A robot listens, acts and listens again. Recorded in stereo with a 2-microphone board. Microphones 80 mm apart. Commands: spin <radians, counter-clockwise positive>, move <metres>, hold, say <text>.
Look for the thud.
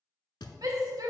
spin 1.22
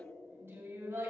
hold
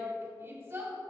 say I heard a thud, but can't make it out now. It was about straight ahead or 40° left.